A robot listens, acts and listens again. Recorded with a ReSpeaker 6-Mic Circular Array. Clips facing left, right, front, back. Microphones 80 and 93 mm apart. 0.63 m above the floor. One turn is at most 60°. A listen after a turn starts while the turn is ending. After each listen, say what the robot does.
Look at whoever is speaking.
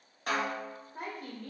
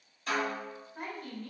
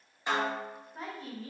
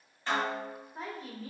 Turn 60° left.
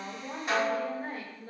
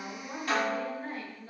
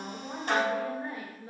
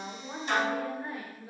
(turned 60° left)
Turn 60° left.
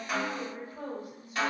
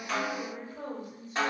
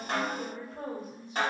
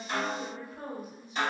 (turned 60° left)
Turn 10° left.
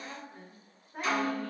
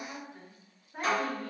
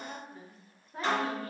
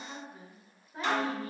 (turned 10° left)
Found it: a woman speaking, straight ahead, 1 to 2 m away.